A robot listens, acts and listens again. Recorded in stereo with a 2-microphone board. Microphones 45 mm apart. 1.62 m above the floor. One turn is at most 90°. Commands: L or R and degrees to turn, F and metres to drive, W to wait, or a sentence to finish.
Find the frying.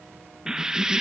R30
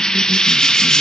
L15
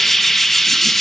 Found it: frying, straight ahead.